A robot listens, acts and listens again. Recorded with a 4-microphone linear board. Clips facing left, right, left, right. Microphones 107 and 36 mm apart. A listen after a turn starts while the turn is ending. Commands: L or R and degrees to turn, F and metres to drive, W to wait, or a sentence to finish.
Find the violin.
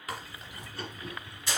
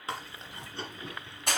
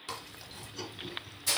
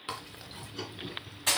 W
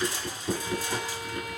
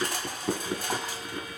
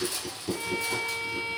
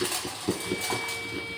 L65
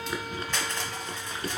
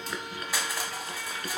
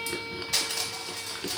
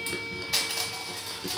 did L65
W
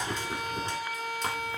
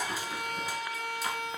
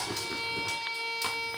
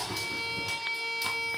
L15
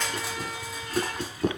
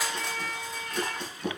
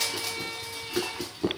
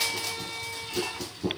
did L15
Found it: a violin, straight ahead.